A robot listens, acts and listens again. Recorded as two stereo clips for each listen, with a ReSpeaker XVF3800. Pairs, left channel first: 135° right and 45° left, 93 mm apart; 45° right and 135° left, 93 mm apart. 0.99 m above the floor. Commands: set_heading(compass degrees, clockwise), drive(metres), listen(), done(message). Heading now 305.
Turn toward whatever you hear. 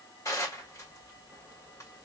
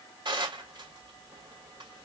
set_heading(135)
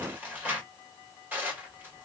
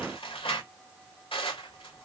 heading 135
set_heading(160)
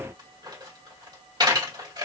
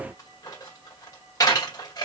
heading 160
done("Found it: dishes clattering, straight ahead.")